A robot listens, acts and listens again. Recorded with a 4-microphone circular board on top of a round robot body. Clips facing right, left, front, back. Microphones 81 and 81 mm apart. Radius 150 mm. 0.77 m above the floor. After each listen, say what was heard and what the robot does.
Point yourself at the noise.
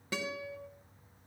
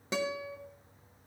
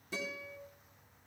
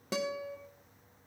The guitar: 160° left. Turn 160° left.
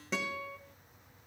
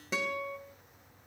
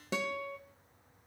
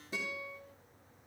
Facing the guitar, 1 to 2 m away.